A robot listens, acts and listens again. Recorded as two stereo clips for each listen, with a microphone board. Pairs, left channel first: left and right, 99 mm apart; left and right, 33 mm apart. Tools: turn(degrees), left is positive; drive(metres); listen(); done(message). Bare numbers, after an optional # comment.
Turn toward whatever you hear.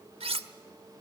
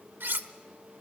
turn(-90)
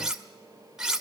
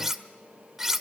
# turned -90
done("Facing the cutlery clinking.")